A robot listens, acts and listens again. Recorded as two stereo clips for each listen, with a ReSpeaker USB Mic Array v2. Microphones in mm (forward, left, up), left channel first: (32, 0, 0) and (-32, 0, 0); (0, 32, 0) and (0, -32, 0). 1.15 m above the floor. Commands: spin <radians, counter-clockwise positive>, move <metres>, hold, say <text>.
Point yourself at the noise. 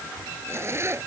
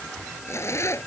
spin 2.36
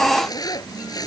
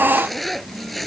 say Found it: a zipper, straight ahead.